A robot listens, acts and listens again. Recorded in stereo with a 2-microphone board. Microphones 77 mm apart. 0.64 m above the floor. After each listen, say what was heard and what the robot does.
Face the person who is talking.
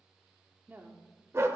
The woman speaking: about 25° right or 155° right. Turn 25° right.
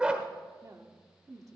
So it is at 125° right. Turn 125° right.
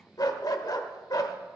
Keep listening.
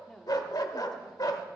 The woman speaking is now 10° left. Turn 10° left.
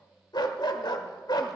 Keep listening.
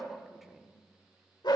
Keep listening.
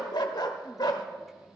I heard a woman speaking from this way, but can't make it out now.